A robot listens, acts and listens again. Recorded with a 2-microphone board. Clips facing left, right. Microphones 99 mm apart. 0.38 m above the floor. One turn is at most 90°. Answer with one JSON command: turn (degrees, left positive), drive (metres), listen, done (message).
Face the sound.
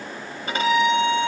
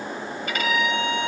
{"turn": 30}
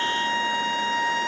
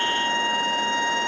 {"done": "Found it: a violin, straight ahead, under 1 m away."}